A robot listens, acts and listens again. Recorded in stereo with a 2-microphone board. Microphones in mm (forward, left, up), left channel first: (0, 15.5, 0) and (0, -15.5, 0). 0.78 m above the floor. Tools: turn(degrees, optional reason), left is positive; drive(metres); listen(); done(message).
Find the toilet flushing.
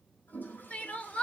turn(degrees=90)
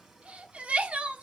listen()
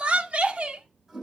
turn(degrees=-10, reason="The toilet flushing is now 10° right.")
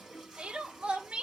done("Found it: a toilet flushing, straight ahead.")